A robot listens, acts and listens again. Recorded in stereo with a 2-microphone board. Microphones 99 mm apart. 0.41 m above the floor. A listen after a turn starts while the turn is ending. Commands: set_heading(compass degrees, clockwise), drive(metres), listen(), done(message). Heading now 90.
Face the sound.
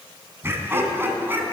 set_heading(110)
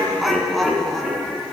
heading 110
done("Facing the laughter, 2 to 4 m away.")